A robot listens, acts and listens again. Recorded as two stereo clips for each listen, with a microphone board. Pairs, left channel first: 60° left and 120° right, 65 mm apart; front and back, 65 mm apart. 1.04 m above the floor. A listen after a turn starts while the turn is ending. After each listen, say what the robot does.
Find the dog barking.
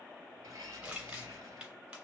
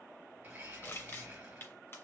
Keep listening.
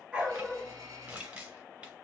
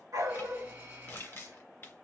Turn 165° left.
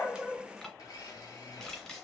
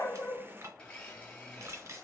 Keep listening.
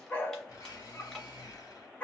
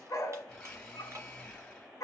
Found it: a dog barking, straight ahead.